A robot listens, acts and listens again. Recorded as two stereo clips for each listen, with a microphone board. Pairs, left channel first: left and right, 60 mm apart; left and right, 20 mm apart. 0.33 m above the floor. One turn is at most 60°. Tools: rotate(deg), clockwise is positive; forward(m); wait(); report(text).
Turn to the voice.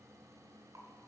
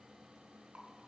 wait()
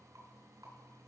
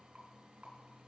wait()
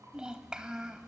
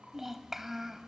rotate(30)
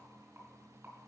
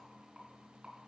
wait()
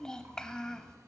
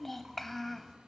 rotate(-10)
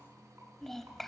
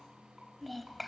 report("Found it: a child speaking, straight ahead, under 1 m away.")